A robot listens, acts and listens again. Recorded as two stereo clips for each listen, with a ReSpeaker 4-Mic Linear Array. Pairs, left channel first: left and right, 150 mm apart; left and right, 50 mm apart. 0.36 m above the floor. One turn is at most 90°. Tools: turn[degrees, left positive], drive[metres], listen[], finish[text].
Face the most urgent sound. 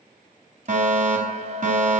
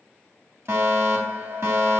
Thought: The fire alarm: about 60° right or 120° right.
Action: turn[-60]
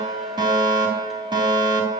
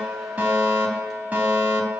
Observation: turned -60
Thought: So it is at 35° right.
Action: turn[-35]
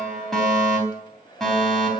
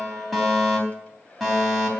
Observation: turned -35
Action: finish[Found it: a fire alarm, straight ahead, 2 to 4 m away.]